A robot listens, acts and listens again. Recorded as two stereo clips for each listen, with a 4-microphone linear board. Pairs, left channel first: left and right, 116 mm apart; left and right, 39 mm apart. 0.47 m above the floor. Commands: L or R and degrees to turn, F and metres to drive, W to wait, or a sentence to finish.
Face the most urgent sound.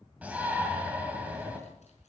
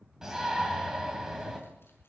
R30
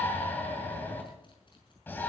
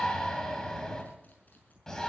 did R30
L15
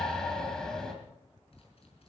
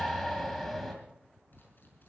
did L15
Facing the shout, 2 to 4 m away.